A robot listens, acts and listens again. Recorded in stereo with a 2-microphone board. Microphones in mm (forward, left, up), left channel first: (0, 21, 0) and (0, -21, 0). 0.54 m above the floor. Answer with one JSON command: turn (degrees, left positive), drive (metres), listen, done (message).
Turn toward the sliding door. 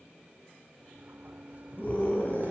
{"turn": -40}
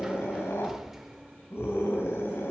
{"turn": -10}
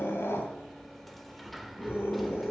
{"done": "Facing the sliding door."}